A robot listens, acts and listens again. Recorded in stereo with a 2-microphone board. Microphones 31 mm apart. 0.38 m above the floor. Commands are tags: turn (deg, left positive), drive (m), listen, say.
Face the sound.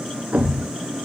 <turn deg="-45"/>
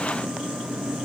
<listen/>
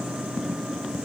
<say>I heard a thud, but can't make it out now. It was about straight ahead or 90° right.</say>